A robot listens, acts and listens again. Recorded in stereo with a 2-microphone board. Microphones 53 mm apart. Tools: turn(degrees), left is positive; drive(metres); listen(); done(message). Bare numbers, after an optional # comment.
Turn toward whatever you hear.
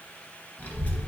# The child speaking: about 35° left or 145° left.
turn(35)
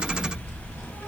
# So it is at 100° left.
turn(100)
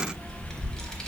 # The child speaking is now 15° left.
turn(15)
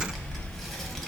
done("Facing the child speaking.")